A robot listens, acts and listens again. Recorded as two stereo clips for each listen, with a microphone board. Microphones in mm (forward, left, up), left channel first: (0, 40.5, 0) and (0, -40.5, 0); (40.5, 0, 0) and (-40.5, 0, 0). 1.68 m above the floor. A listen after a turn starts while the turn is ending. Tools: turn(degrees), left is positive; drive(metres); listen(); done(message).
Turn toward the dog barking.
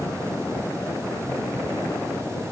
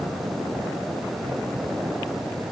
listen()
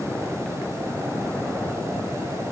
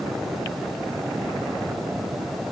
listen()
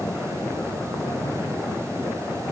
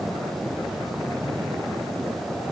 done("I can't make out a dog barking to turn to.")